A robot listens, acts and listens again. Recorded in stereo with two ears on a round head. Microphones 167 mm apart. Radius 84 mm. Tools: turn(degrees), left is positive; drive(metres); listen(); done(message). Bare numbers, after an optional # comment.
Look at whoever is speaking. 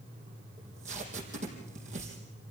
listen()
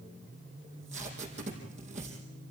listen()
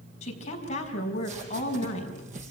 # The woman speaking: about 35° left or 145° left.
turn(35)
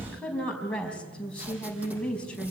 done("Found it: a woman speaking, straight ahead, over 4 m away.")